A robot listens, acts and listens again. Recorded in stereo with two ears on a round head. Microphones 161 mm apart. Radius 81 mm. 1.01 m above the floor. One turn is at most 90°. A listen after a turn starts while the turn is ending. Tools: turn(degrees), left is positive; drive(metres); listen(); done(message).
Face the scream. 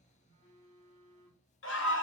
turn(degrees=90)
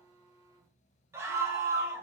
turn(degrees=-15)
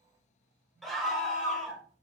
done("Found it: a scream, straight ahead, 1 to 2 m away.")